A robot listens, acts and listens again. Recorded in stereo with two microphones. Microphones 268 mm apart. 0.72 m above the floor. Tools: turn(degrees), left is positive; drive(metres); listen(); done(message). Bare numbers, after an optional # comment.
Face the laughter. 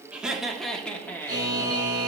turn(30)
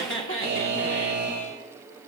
# So it is at 130° left.
turn(130)
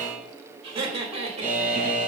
# The laughter is now 25° right.
turn(-25)
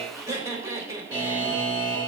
# The laughter is now 10° right.
turn(-10)
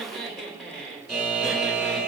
done("Found it: laughter, straight ahead.")